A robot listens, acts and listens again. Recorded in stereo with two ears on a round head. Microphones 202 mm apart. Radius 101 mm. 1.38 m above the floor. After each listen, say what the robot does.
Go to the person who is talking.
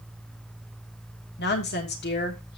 Turn 50° left.
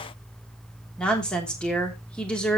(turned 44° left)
Drive 1.0 m forward.
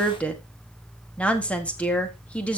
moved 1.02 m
Drive 1.0 m forward.
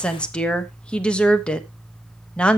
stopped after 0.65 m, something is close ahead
I am next to the woman speaking.